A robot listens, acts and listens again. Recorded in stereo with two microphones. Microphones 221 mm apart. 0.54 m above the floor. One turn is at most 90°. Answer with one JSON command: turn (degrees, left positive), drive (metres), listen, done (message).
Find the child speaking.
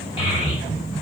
{"turn": 20}
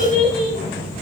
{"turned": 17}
{"done": "Facing the child speaking."}